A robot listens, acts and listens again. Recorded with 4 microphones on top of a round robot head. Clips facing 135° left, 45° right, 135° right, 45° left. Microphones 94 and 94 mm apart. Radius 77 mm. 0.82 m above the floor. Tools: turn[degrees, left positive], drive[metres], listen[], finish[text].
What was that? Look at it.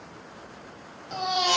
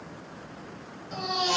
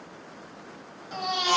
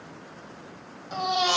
Thought: The baby crying: 115° left.
Action: turn[115]
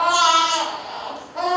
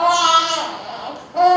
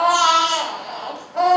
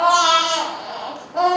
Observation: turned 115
Thought: The baby crying is now 25° right.
Action: turn[-25]
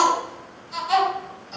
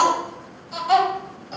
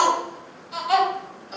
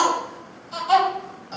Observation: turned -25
Thought: The baby crying is now 15° right.
Action: turn[-15]
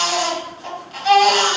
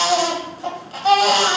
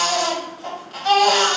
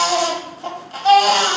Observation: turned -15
Action: finish[Found it: a baby crying, straight ahead, 1 to 2 m away.]